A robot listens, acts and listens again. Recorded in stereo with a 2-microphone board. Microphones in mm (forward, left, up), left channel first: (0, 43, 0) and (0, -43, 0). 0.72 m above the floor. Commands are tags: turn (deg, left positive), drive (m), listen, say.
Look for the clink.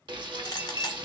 <turn deg="50"/>
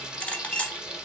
<turn deg="20"/>
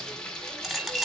<say>Found it: a clink, straight ahead.</say>